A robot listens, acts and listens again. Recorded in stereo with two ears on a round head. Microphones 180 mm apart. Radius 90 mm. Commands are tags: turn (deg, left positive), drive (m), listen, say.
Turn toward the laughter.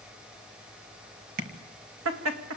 <turn deg="-90"/>
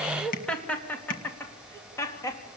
<turn deg="20"/>
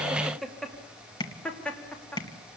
<say>Facing the laughter, 2 to 4 m away.</say>